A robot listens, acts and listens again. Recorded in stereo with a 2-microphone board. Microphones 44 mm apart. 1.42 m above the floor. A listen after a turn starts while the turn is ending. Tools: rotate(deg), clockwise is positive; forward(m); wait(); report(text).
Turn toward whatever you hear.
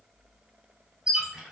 rotate(15)
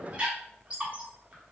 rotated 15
rotate(150)
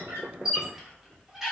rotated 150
rotate(10)
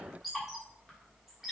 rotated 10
report("Found it: a squeak, straight ahead.")